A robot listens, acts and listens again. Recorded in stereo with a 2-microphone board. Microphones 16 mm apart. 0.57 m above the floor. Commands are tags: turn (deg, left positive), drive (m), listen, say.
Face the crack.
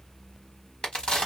<turn deg="70"/>
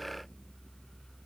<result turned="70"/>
<listen/>
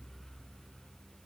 <say>I heard a crack, but can't make it out now. It was about straight ahead or 40° left.</say>